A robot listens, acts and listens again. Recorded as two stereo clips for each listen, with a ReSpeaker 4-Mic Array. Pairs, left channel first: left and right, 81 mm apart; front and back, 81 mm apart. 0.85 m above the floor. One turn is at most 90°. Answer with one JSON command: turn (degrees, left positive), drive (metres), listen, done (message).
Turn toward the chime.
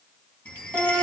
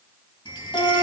{"turn": 15}
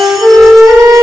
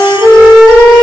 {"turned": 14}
{"listen": true}
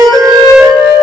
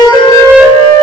{"listen": true}
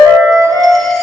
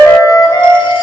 {"done": "Facing where the chime came from. I can't hear it now."}